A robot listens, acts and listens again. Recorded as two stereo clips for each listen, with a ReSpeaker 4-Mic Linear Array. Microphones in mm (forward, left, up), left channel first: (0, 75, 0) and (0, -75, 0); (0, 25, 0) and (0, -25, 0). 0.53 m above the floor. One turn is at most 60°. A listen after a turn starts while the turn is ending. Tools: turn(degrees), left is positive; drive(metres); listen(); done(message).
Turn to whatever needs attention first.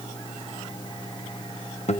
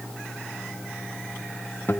listen()
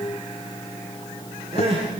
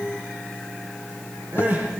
turn(degrees=-40)
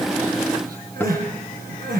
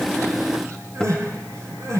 turn(degrees=-60)
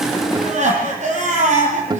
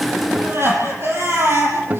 turn(degrees=-55)
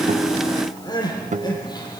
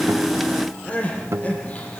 turn(degrees=25)
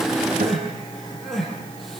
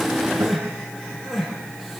done("Facing the crying, over 4 m away.")